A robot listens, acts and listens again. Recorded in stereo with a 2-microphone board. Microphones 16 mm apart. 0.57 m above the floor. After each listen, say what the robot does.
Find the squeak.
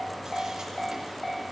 Keep listening.
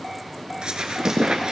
Turn 60° right.
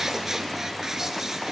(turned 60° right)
Turn 35° right.
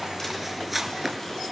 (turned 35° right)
Turn 20° right.
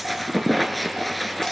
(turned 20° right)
Facing the squeak.